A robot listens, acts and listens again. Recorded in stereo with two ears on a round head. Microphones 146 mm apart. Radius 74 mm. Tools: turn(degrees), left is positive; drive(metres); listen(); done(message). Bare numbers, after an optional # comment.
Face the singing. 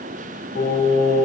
# The singing: about 65° left or 115° left.
turn(65)
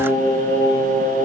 # So it is at 10° left.
turn(10)
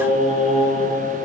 done("Facing the singing, over 4 m away.")